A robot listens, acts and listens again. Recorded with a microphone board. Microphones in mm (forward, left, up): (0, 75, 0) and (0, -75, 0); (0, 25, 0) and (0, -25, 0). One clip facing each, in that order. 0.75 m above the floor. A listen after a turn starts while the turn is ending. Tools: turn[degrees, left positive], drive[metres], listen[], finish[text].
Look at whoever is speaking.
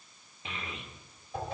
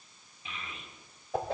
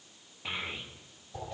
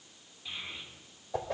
Thought: The child speaking: about 65° left or 115° left.
Action: turn[65]
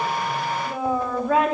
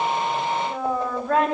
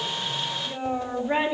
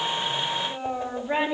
Action: finish[Found it: a child speaking, straight ahead, 1 to 2 m away.]